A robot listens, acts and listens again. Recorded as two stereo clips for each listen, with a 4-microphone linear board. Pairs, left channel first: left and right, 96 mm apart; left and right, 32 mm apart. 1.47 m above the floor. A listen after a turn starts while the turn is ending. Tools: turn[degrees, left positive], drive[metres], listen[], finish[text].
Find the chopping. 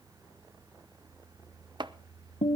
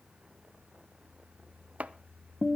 Thought: The chopping: about 50° right or 130° right.
Action: turn[-50]
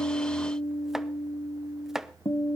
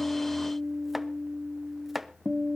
Action: finish[Found it: chopping, straight ahead, under 1 m away.]